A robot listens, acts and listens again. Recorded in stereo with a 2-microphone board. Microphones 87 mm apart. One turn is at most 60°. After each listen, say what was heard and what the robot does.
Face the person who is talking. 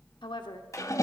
The woman speaking: about 65° left or 115° left. Turn 60° left.
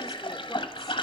Keep listening.
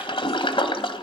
Keep listening.
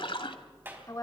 So it is at 45° left. Turn 45° left.
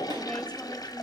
Keep listening.
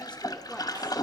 Keep listening.
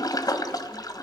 Facing where the woman speaking came from. I can't hear it now.